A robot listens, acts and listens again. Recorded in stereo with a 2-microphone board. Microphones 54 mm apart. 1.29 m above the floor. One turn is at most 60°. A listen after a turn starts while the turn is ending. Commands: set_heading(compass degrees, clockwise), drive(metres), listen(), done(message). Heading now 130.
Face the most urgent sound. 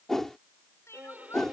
set_heading(80)
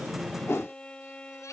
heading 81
listen()
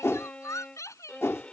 set_heading(21)
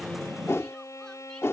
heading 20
set_heading(5)
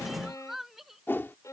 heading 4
done("Found it: crying, straight ahead.")